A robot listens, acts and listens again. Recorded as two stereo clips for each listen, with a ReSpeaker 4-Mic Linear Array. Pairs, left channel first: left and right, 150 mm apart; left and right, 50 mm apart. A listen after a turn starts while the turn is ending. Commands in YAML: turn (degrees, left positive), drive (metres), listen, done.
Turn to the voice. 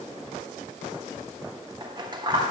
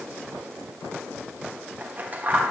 listen: true
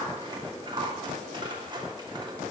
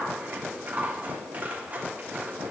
listen: true
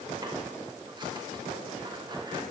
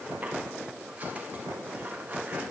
done: "I can't make out anyone speaking, only scissors."